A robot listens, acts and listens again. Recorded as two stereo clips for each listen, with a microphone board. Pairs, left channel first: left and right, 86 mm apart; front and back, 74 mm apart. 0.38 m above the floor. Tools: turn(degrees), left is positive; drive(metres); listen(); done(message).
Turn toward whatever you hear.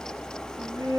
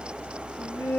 turn(degrees=-50)
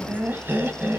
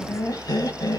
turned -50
turn(degrees=-25)
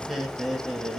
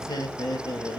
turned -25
done("Facing the laughter, 2 to 4 m away.")